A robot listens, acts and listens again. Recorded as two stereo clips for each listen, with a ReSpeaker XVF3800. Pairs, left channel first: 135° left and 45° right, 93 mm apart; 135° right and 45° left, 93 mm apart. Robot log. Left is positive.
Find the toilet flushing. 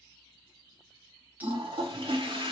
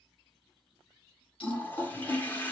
note: The toilet flushing: 65° right.
cmd yaw -65
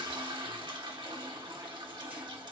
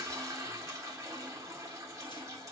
note: The toilet flushing is now 10° right.
cmd yaw -10
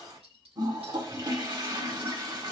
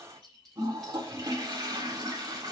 end: Found it: a toilet flushing, straight ahead.